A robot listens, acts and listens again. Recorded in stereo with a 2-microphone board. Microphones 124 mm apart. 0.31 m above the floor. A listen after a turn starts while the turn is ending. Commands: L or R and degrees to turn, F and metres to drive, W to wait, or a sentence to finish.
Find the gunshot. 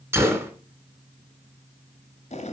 R20
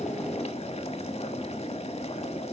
W
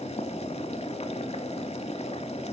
I heard a gunshot, but can't make it out now. It was about straight ahead or 140° right.